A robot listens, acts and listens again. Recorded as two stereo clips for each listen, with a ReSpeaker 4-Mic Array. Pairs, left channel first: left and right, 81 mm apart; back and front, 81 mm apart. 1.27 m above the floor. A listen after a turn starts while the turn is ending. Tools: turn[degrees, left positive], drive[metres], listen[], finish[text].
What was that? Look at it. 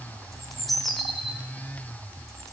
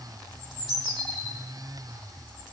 Action: finish[Facing the bird.]